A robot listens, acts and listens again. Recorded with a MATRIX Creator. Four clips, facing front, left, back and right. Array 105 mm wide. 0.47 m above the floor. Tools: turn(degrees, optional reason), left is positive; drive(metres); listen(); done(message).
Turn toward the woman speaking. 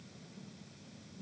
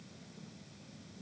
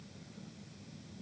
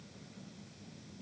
listen()
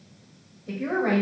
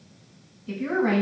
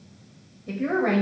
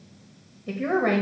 turn(degrees=-100, reason="The woman speaking: 100° right.")
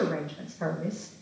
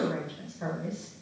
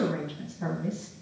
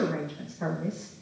turn(degrees=-15, reason="The woman speaking is now 15° right.")
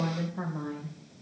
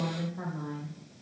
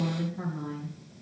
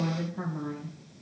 turn(degrees=-15, reason="The woman speaking is now 15° right.")
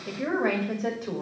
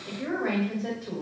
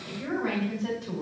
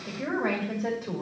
turn(degrees=-20, reason="The woman speaking is now 20° right.")
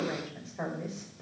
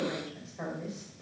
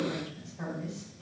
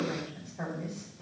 done("Found it: a woman speaking, straight ahead.")